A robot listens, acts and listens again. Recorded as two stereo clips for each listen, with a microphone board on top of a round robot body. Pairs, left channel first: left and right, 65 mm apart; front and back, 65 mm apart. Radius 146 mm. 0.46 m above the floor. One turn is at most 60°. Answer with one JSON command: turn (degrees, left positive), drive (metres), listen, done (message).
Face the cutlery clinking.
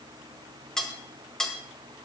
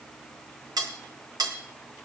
{"turn": 60}
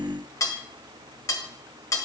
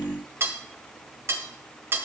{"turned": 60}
{"turn": 60}
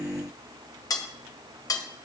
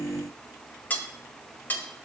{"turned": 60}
{"turn": 60}
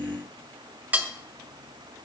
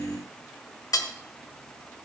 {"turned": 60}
{"turn": -20}
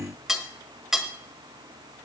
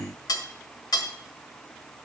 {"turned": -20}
{"done": "Found it: cutlery clinking, straight ahead, 1 to 2 m away."}